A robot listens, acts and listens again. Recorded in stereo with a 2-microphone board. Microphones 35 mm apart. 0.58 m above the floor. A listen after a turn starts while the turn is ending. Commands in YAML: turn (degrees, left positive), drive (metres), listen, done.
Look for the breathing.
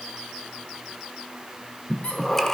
turn: 30
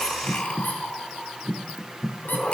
turn: 135
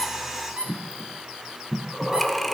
done: "Found it: breathing, straight ahead, 1 to 2 m away."